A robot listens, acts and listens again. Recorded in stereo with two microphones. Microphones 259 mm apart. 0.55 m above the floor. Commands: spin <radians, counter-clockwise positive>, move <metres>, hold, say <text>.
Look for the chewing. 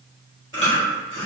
spin -0.87
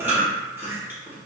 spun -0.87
spin -0.17
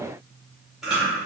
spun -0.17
say Found it: chewing, straight ahead, 1 to 2 m away.